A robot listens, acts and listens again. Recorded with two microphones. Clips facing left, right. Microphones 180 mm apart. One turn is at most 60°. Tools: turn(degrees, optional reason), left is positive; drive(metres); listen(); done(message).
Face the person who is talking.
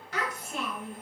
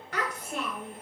turn(degrees=-50, reason="The child speaking: about 50° right or 130° right.")
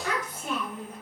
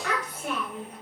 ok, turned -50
turn(degrees=-60, reason="So it is at 75° right.")
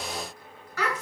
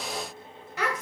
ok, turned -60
turn(degrees=-20, reason="The child speaking is now 20° right.")
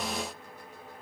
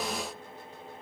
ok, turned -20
listen()
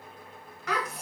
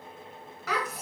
done("Found it: a child speaking, straight ahead, 1 to 2 m away.")